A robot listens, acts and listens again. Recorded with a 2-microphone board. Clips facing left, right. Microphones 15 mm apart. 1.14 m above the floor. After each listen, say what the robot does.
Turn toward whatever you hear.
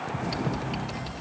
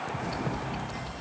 Turn 40° left.
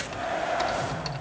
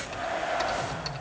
Found it: typing on a keyboard, straight ahead, 1 to 2 m away.